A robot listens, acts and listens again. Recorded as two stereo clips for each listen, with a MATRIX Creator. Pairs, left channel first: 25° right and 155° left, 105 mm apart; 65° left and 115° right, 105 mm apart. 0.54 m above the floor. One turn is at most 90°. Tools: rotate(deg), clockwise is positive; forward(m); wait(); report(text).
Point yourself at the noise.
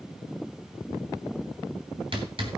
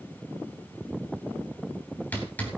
rotate(-90)
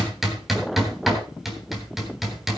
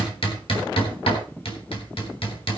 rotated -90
rotate(-70)
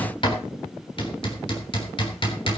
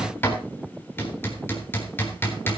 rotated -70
report("Facing the hammering, 2 to 4 m away.")